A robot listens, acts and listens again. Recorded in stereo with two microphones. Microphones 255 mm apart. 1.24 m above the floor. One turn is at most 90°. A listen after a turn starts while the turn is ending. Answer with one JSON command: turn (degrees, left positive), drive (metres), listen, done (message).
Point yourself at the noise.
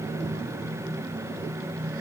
{"listen": true}
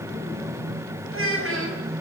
{"turn": -60}
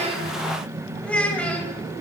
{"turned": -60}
{"done": "Facing the child speaking, over 4 m away."}